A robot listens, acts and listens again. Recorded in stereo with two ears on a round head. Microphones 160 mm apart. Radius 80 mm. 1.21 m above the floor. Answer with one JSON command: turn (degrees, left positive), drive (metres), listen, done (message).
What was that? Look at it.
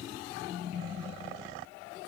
{"listen": true}
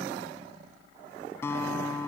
{"turn": 30}
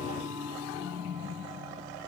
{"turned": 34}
{"turn": -20}
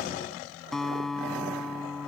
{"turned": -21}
{"done": "Facing the guitar."}